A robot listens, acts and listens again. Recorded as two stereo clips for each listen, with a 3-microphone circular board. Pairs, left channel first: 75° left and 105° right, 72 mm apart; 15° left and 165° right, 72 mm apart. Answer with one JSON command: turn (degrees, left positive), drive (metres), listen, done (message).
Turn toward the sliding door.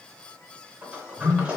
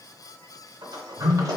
{"turn": -175}
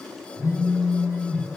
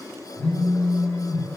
{"turn": -10}
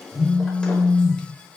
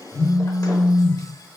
{"listen": true}
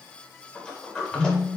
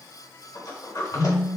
{"done": "Found it: a sliding door, straight ahead, under 1 m away."}